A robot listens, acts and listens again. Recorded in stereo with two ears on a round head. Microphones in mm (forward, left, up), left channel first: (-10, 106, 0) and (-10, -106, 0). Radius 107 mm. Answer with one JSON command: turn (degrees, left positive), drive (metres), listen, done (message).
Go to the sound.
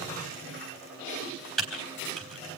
{"turn": 30}
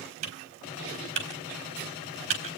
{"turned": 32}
{"turn": -30}
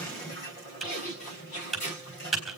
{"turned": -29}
{"drive": 1.0}
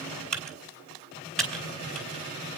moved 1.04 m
{"drive": 1.0}
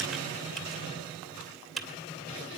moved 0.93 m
{"drive": 1.0}
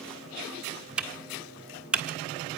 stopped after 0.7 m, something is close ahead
{"done": "I am next to the typing on a keyboard."}